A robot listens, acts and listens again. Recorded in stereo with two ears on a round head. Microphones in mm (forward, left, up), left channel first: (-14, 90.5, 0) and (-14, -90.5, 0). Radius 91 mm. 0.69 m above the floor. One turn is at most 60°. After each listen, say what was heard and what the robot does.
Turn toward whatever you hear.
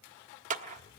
The clap: about 40° right or 140° right. Turn 40° right.
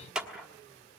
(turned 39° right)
Found it: a clap, straight ahead, 1 to 2 m away.